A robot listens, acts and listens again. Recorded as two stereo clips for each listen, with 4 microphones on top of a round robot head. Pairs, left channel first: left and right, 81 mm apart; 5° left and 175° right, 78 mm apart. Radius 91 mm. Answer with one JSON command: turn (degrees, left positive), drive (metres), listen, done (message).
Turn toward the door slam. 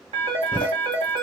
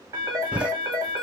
{"turn": 110}
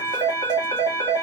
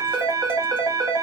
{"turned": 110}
{"done": "I heard a door slam from this way, but can't make it out now."}